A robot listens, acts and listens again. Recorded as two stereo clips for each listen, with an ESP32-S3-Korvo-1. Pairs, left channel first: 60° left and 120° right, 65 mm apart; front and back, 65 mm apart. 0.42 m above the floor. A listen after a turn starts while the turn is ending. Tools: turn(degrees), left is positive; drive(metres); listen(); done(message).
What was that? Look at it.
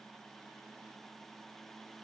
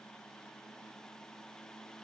listen()
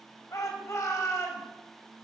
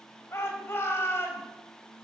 turn(degrees=40)
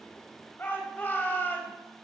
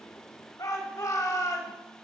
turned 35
done("Facing the shout.")